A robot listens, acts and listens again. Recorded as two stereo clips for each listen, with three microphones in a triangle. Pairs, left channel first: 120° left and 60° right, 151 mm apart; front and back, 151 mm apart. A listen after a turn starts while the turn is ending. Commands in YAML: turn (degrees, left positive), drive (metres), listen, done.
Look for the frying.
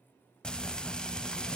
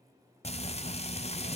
turn: 35
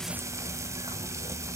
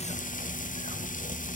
turn: 10
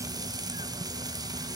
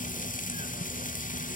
done: "Facing the frying, under 1 m away."